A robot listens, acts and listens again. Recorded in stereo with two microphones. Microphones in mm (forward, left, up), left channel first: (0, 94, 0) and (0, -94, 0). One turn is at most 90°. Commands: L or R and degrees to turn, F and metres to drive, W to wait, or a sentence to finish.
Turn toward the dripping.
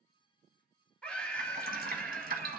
R50
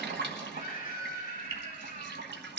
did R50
R75
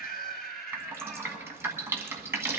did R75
R15
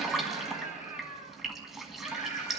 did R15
Found it: dripping, straight ahead, 1 to 2 m away.